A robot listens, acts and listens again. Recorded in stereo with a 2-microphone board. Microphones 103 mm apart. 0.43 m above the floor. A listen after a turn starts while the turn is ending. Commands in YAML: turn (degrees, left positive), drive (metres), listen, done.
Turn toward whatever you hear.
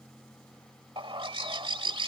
turn: -60
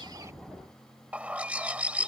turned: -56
turn: -15
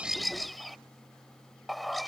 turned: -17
done: "Facing the bird."